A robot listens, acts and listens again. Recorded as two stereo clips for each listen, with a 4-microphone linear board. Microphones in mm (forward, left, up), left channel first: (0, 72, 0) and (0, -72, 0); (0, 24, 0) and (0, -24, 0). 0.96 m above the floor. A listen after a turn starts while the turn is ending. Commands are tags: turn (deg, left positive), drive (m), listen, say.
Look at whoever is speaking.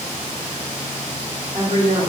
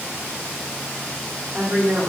<turn deg="-70"/>
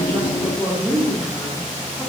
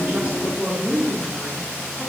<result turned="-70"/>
<say>Found it: a woman speaking, straight ahead.</say>